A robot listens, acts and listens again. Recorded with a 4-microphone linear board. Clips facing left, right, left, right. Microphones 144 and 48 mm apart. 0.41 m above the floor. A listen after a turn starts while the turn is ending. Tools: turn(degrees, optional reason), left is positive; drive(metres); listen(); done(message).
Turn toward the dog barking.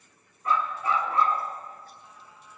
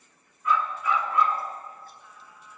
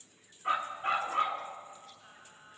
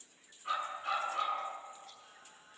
turn(degrees=30, reason="The dog barking: about 30° left or 150° left.")
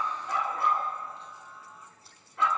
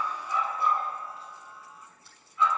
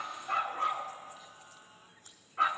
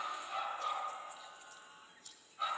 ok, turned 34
turn(degrees=115, reason="So it is at 115° left.")
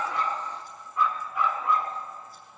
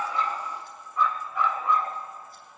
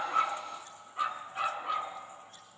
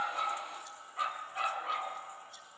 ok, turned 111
done("Found it: a dog barking, straight ahead, 1 to 2 m away.")